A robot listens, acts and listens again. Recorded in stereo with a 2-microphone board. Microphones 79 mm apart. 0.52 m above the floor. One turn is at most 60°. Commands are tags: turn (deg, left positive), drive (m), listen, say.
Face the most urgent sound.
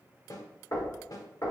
<listen/>
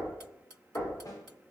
<listen/>
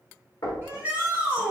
<turn deg="-25"/>
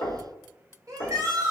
<turn deg="-60"/>
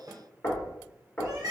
<turn deg="-60"/>
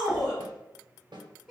<say>Found it: a shout, straight ahead, 1 to 2 m away.</say>